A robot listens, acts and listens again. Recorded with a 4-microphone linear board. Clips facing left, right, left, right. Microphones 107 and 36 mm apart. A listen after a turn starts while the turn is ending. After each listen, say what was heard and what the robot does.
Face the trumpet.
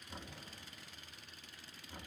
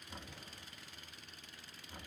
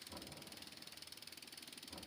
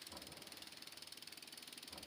Keep listening.
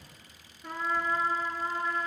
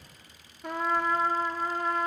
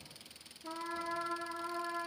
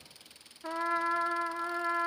The trumpet: about 65° right or 115° right. Turn 65° right.
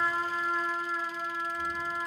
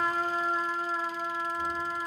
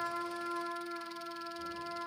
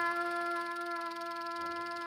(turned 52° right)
So it is at 35° right. Turn 35° right.
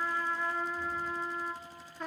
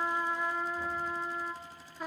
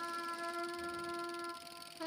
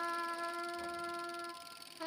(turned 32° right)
Facing the trumpet.